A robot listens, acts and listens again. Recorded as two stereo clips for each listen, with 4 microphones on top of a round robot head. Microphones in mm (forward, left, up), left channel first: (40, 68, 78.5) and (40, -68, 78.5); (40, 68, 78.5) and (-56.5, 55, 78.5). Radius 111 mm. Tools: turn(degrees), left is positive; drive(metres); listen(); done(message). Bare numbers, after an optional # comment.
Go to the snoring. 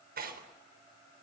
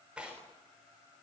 listen()
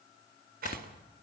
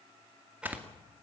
# The snoring: 120° left.
turn(120)
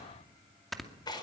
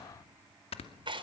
drive(1.0)
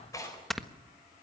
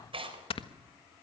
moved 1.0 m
drive(1.0)
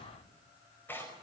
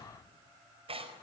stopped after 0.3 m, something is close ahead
listen()
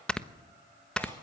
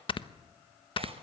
done("Arrived at the snoring, straight ahead.")